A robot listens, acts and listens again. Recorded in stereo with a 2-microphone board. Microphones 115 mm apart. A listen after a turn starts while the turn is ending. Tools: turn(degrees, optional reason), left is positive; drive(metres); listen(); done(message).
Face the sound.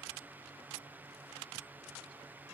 listen()
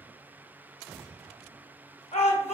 turn(degrees=65, reason="The shout: about 65° left or 115° left.")
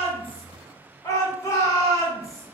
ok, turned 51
turn(degrees=30, reason="So it is at 30° left.")
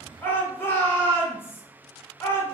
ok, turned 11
turn(degrees=20, reason="The shout is now 20° left.")
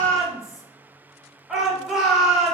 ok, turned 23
done("Facing the shout, 1 to 2 m away.")